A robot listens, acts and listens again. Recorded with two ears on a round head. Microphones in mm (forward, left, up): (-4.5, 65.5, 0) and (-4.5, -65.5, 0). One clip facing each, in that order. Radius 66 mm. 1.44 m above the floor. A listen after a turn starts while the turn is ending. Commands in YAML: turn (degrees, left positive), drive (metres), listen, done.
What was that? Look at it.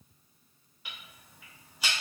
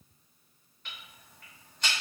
turn: 30
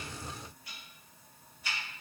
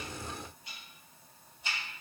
turn: -20
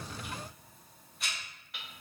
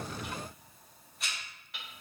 done: "Found it: ticking, straight ahead, under 1 m away."